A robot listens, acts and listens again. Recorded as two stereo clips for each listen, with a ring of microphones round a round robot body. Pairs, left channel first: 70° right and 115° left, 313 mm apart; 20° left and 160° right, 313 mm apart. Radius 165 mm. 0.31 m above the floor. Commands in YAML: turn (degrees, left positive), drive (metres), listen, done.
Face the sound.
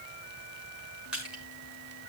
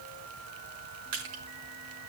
turn: -160
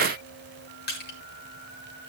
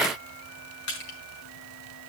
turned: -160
turn: -10
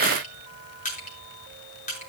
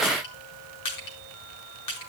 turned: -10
done: "Found it: crushing, straight ahead, over 4 m away."